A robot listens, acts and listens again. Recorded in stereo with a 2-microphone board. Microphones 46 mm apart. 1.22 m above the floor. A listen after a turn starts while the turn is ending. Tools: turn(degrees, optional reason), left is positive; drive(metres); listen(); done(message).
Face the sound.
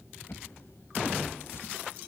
turn(degrees=60, reason="The drawer: about 60° left or 120° left.")
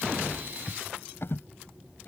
turn(degrees=60, reason="So it is at 60° left.")
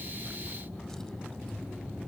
listen()
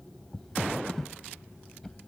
turn(degrees=10, reason="The drawer is now 10° left.")
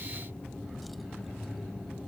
listen()
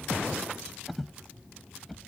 done("Found it: a drawer, straight ahead.")